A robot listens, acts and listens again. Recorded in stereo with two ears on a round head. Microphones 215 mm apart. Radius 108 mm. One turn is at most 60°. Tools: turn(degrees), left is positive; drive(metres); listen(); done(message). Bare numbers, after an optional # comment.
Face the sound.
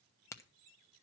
turn(30)
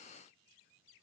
listen()
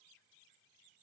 done("I heard a crack, but can't make it out now. It was about 20° right or 140° left.")